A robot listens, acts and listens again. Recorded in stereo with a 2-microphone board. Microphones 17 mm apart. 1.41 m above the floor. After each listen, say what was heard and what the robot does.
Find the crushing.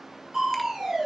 The crushing: about 45° right or 135° right. Turn 45° right.
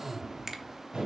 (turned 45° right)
So it is at 95° right. Turn 95° right.
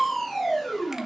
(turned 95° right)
The crushing is now 15° left. Turn 15° left.
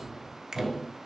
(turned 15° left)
Facing the crushing, 2 to 4 m away.